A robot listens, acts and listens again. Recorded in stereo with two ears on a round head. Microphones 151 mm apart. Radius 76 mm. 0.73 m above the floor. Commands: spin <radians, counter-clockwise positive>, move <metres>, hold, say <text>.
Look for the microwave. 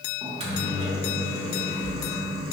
spin -0.61
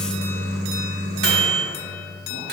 spin -1.83
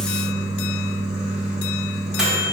say Facing the microwave.